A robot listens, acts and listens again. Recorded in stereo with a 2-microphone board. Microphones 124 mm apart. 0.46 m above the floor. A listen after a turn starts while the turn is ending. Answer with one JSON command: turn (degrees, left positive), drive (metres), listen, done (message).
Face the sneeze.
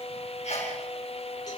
{"turn": 65}
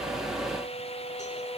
{"listen": true}
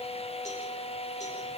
{"done": "I heard a sneeze, but can't make it out now. It was about straight ahead or 50° left."}